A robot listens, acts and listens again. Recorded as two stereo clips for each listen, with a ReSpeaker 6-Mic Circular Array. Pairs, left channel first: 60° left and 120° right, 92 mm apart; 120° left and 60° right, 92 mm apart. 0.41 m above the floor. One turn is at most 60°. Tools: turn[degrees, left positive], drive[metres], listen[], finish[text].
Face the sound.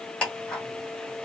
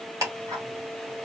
Thought: The ticking: 15° right.
Action: turn[-15]
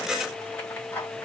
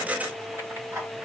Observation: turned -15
Action: finish[Facing the ticking.]